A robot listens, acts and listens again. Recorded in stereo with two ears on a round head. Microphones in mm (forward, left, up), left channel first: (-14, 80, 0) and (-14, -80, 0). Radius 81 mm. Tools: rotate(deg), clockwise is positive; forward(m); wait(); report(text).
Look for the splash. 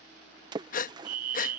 rotate(25)
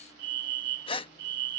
wait()
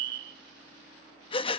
report("I heard a splash, but can't make it out now. It was about straight ahead or 130° right.")